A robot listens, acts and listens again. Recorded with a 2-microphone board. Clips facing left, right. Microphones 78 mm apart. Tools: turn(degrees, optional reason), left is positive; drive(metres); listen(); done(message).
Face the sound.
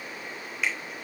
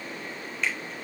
turn(degrees=30)
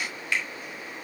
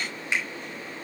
turn(degrees=-20, reason="So it is at 20° right.")
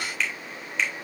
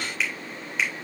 done("Found it: a finger snap, straight ahead.")